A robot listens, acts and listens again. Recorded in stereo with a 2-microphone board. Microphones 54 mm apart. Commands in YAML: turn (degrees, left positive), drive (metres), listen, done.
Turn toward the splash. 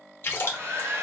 turn: 40
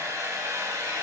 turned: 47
listen: true
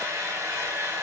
done: "I heard a splash, but can't make it out now. It was about 5° right or 95° left."